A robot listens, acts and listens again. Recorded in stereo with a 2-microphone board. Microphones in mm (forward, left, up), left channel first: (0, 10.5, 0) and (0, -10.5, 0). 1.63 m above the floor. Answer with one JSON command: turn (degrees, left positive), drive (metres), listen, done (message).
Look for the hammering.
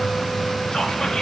{"listen": true}
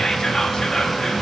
{"listen": true}
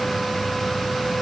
{"done": "I can't make out hammering to turn to."}